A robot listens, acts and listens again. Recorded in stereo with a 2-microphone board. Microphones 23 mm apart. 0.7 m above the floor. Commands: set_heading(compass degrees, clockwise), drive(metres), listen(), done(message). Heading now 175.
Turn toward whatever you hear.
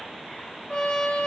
set_heading(125)
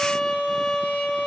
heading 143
set_heading(48)
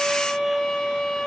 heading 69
set_heading(49)
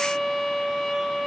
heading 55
done("Facing the trumpet, 2 to 4 m away.")